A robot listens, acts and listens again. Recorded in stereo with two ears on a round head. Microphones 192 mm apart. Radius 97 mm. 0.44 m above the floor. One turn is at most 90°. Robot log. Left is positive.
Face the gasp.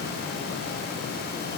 cmd idle
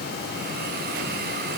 cmd idle
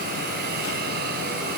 end: I can't make out a gasp to turn to.